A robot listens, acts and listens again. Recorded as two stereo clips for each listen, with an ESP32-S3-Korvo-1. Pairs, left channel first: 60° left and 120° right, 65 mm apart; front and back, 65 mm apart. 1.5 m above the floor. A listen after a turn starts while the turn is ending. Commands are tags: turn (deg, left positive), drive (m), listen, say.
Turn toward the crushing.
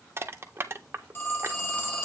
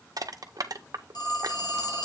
<turn deg="-170"/>
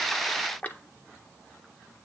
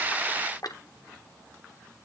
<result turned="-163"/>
<say>Found it: crushing, straight ahead.</say>